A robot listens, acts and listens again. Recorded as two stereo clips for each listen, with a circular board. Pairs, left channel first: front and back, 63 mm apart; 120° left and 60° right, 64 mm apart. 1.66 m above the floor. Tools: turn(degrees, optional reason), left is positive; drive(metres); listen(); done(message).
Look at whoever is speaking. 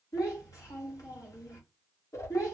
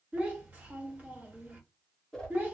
done("Facing the child speaking, 1 to 2 m away.")